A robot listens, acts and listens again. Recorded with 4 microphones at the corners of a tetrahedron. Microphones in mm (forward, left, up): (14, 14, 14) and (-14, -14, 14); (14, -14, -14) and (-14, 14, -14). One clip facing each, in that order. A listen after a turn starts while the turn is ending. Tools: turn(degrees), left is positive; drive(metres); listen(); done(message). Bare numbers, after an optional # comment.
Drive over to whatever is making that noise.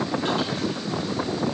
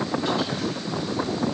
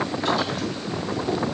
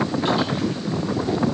listen()
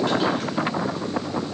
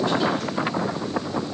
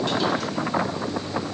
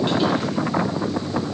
listen()
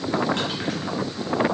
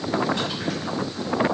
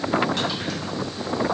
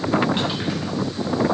done("I can't make out anything.")